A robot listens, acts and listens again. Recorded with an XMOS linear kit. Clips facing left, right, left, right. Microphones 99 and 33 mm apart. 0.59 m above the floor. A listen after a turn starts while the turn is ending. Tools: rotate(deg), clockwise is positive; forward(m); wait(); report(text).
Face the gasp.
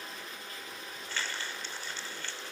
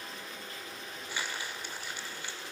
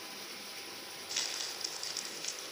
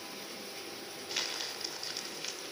wait()
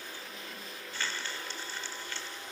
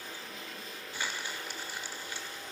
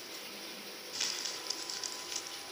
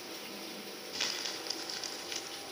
wait()
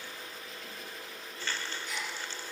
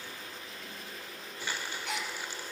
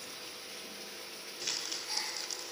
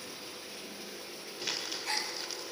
rotate(90)
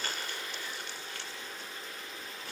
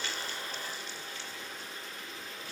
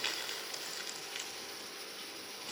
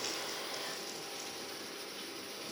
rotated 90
report("Facing where the gasp came from. I can't hear it now.")